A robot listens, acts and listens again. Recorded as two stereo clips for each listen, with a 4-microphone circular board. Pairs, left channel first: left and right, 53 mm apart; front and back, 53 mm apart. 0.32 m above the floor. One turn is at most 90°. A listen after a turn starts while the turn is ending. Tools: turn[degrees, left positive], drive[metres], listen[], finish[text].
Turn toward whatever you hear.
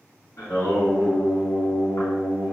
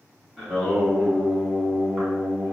Thought: The singing: 115° left.
Action: turn[90]
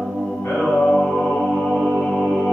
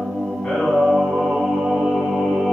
Thought: The singing is now 95° left.
Action: turn[90]
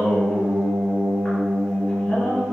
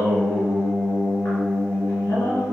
Thought: The singing is now 25° left.
Action: turn[25]
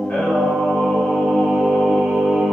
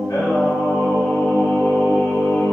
Action: finish[Facing the singing.]